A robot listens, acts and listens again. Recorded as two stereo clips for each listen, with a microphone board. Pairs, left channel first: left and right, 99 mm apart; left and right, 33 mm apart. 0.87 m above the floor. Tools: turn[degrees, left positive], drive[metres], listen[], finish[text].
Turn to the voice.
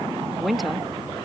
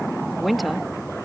Action: turn[30]
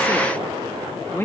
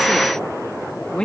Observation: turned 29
Thought: So it is at 150° left.
Action: turn[150]
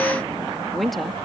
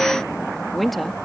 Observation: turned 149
Action: finish[Found it: a woman speaking, straight ahead.]